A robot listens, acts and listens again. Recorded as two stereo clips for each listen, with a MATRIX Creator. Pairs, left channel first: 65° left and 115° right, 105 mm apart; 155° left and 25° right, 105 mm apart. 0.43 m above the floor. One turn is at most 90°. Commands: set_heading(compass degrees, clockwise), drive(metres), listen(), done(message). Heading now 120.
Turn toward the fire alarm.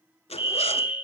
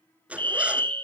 set_heading(160)
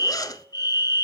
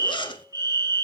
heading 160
set_heading(135)
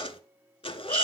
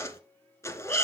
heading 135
listen()
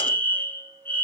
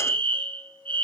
done("Facing the fire alarm.")